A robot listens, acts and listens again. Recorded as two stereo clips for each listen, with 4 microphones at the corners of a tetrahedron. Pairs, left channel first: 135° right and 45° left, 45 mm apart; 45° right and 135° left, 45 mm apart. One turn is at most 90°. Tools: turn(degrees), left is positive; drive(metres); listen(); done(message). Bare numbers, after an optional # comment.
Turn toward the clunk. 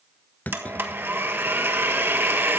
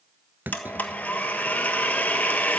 # The clunk: 175° left.
turn(90)
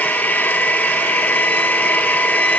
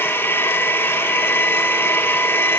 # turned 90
# Nothing new. It was at 85° left.
turn(85)
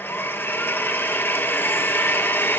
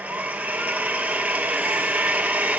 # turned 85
done("I heard a clunk from this way, but can't make it out now.")